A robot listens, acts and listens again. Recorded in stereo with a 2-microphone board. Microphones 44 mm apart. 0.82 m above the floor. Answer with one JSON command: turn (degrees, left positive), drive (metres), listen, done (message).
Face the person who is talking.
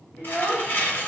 {"turn": 70}
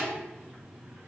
{"listen": true}
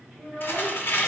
{"turn": -25}
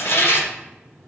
{"listen": true}
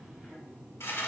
{"listen": true}
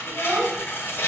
{"turn": -30}
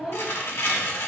{"done": "Facing the child speaking."}